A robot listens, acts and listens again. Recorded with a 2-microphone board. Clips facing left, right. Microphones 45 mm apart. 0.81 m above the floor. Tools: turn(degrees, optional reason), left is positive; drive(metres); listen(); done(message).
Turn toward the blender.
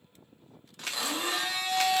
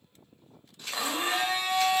turn(degrees=-30, reason="The blender: about 30° right or 150° right.")
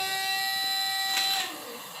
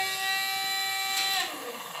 turn(degrees=-115, reason="So it is at 115° right.")
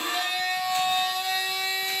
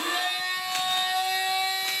done("Facing the blender, under 1 m away.")